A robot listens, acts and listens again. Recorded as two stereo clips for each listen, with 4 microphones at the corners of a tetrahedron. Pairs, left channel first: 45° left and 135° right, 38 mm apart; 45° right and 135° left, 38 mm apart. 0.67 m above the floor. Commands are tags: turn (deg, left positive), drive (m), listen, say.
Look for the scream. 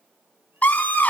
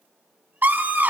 <turn deg="95"/>
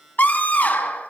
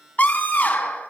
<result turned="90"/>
<say>Facing the scream, over 4 m away.</say>